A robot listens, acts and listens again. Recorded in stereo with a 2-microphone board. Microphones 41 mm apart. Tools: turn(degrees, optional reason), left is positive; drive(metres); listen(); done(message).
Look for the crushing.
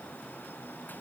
listen()
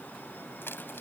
turn(degrees=70, reason="The crushing: about 70° left or 110° left.")
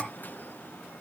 listen()
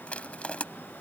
turn(degrees=35, reason="So it is at 35° left.")
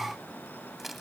done("Found it: crushing, straight ahead.")